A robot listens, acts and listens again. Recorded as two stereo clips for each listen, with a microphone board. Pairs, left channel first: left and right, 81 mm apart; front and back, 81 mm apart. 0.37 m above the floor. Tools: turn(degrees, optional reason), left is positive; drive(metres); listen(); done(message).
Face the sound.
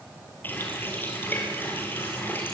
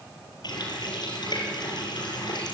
turn(degrees=25, reason="The running tap: 25° left.")
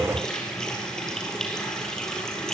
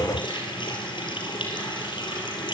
turn(degrees=10, reason="The running tap is now 10° left.")
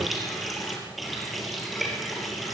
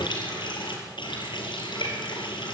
done("Facing the running tap, over 4 m away.")